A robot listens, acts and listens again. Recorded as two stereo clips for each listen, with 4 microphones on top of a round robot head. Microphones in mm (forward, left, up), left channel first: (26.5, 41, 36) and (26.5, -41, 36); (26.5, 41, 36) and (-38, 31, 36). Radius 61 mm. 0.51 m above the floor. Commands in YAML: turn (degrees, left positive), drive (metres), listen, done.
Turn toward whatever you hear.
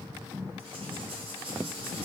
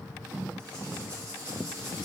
turn: -105
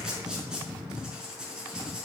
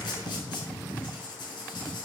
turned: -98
turn: -10
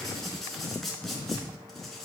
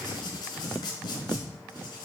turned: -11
done: "Facing the writing, over 4 m away."